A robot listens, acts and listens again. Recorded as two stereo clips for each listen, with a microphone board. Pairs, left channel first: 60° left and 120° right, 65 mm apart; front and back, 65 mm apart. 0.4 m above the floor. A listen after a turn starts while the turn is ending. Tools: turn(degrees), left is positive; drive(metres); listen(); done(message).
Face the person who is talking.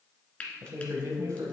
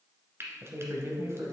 turn(degrees=-140)
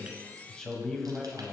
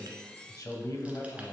turn(degrees=-25)
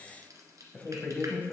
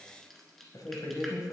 done("Facing the man speaking, 1 to 2 m away.")